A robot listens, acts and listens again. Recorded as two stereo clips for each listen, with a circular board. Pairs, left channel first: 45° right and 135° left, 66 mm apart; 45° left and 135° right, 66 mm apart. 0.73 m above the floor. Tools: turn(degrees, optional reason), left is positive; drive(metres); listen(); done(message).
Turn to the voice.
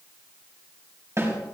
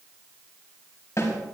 listen()
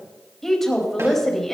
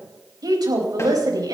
turn(degrees=-130, reason="The woman speaking: 130° right.")
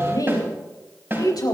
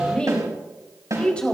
turn(degrees=-30, reason="The woman speaking is now 30° right.")
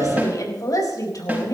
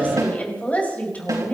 turn(degrees=-20, reason="The woman speaking is now 20° right.")
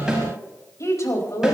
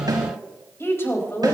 done("Found it: a woman speaking, straight ahead.")